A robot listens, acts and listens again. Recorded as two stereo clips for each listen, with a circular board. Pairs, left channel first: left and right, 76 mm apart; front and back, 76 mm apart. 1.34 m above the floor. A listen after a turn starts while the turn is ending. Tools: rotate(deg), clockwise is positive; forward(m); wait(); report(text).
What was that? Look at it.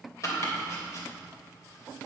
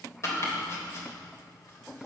rotate(-45)
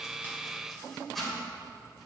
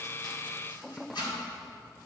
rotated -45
report("Found it: chopping, straight ahead, 2 to 4 m away.")